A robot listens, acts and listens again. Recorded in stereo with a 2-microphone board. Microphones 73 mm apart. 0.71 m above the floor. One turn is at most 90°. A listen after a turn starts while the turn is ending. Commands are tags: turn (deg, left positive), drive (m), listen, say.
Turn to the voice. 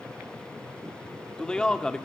<turn deg="30"/>
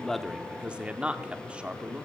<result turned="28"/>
<turn deg="-15"/>
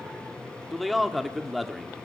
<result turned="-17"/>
<say>Facing the man speaking.</say>